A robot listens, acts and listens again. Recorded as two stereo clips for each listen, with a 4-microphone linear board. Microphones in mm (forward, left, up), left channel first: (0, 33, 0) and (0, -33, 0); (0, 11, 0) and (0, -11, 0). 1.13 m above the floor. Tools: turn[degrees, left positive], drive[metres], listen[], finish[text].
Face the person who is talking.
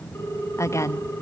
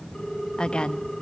Thought: The woman speaking: about 50° left or 130° left.
Action: turn[50]
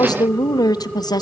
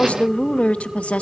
Thought: So it is at 80° left.
Action: turn[80]
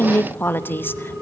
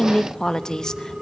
Thought: The woman speaking is now 30° left.
Action: turn[30]
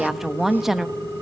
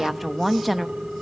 Action: finish[Facing the woman speaking, 1 to 2 m away.]